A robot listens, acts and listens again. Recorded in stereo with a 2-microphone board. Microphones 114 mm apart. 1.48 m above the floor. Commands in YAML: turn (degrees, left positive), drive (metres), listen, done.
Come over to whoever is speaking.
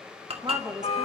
turn: -35
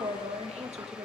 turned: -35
turn: -110
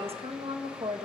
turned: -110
turn: -60
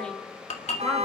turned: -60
listen: true
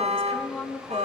drive: 1.0
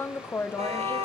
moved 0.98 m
turn: 20
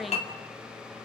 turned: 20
drive: 1.0
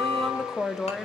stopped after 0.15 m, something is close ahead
done: "I am next to the woman speaking."